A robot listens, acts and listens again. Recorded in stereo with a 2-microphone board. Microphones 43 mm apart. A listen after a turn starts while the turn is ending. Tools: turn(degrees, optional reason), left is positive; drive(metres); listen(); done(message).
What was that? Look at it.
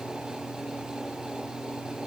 listen()
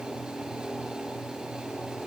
listen()
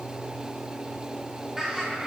turn(degrees=-30)
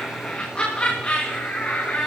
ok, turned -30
turn(degrees=35, reason="So it is at 35° left.")
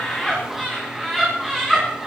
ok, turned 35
turn(degrees=-10, reason="The laughter is now 10° right.")
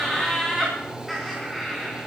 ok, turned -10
done("Found it: laughter, straight ahead, 2 to 4 m away.")